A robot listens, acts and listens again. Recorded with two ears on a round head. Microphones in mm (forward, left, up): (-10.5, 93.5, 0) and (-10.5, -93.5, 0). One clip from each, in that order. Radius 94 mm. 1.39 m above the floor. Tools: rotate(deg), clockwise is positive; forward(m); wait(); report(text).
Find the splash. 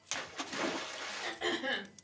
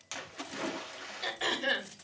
rotate(-20)
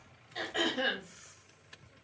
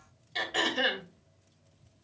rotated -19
wait()
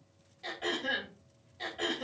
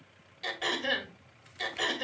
report("I heard a splash, but can't make it out now. It was about straight ahead or 140° left.")